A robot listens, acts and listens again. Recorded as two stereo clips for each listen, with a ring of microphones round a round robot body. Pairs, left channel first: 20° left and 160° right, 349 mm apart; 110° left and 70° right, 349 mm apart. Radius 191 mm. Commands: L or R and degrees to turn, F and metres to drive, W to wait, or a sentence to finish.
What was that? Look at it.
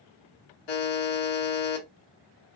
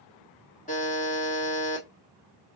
L40
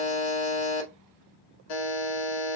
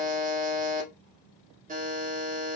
Facing the buzzer.